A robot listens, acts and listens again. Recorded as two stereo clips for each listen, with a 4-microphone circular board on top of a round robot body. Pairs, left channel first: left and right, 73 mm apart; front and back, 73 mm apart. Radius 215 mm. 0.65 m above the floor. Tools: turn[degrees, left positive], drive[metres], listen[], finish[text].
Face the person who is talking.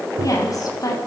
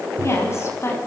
Thought: The woman speaking: 55° left.
Action: turn[55]
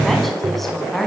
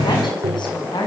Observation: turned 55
Action: finish[Facing the woman speaking.]